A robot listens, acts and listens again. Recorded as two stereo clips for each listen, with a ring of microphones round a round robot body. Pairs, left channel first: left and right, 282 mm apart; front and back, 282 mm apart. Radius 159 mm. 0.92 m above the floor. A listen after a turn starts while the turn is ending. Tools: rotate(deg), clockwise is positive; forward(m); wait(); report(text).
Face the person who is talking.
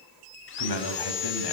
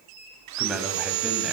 rotate(-90)
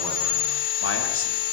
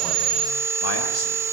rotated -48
rotate(-45)
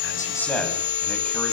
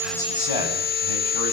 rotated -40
report("Found it: a man speaking, straight ahead, over 4 m away.")